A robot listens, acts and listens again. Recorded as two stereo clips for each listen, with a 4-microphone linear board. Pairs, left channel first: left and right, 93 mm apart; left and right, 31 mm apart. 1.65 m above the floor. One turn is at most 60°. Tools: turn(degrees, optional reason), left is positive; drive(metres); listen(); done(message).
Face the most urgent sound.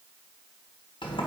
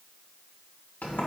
listen()
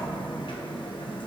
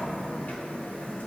listen()
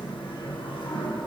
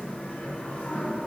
done("I can't make out anything urgent to turn to.")